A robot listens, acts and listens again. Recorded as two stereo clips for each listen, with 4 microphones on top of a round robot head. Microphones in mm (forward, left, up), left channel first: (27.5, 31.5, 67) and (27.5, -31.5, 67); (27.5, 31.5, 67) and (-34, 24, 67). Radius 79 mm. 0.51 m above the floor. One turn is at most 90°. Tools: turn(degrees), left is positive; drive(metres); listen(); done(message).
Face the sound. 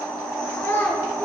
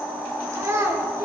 turn(degrees=90)
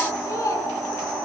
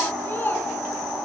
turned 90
turn(degrees=60)
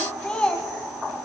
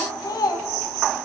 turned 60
turn(degrees=20)
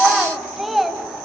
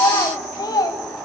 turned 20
done("Facing the child speaking, 2 to 4 m away.")